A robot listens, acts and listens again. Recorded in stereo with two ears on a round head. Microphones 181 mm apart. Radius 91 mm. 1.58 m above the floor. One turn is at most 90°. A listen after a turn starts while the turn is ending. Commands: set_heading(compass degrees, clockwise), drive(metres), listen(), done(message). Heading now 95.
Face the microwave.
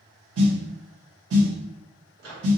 set_heading(155)
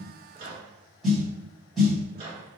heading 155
set_heading(185)
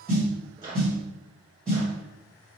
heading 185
set_heading(210)
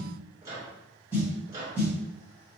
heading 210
set_heading(230)
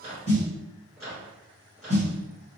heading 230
done("Found it: a microwave, straight ahead, 1 to 2 m away.")